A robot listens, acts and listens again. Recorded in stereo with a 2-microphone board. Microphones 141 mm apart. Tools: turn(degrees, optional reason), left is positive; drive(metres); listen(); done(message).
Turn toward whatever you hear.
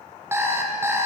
turn(degrees=-20, reason="The alarm clock: about 20° right or 160° right.")
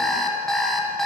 done("Found it: an alarm clock, straight ahead, 1 to 2 m away.")